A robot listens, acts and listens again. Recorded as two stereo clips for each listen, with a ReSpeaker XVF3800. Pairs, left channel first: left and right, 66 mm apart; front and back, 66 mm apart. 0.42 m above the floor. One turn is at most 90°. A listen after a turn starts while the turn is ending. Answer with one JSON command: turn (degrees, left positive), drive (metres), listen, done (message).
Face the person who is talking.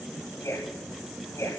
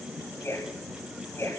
{"turn": 45}
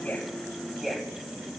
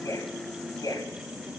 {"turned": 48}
{"done": "Found it: a man speaking, straight ahead, 2 to 4 m away."}